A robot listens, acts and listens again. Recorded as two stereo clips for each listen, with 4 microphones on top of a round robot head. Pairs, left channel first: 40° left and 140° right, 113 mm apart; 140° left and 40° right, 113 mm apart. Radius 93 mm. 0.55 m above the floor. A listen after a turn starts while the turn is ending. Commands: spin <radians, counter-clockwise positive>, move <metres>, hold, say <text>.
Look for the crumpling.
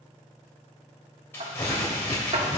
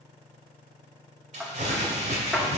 spin -0.52
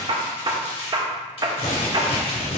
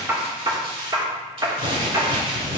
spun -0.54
say Found it: crumpling, straight ahead.